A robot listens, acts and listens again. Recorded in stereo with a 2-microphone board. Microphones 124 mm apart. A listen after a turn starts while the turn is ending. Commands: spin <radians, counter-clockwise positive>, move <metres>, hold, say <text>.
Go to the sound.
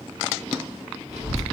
spin -1.22
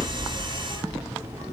spin -0.26
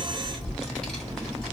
move 1.0
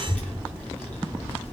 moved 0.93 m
spin 0.26
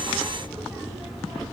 move 1.0
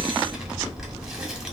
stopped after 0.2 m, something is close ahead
say Arrived at the child speaking, straight ahead.